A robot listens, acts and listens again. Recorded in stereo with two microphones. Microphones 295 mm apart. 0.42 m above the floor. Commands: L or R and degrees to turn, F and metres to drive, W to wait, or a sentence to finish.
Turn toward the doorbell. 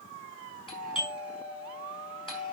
L15
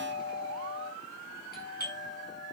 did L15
L150
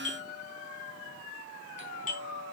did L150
L25
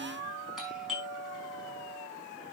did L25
Found it: a doorbell, straight ahead.